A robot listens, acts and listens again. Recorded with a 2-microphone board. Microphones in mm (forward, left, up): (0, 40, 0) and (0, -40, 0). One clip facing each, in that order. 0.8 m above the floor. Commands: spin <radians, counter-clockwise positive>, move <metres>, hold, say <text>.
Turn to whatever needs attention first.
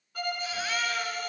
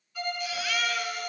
spin 0.61
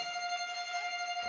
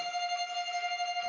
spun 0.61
hold
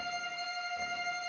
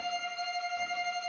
hold
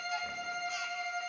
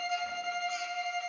say I heard a baby crying, but can't make it out now. It was about straight ahead or 110° left.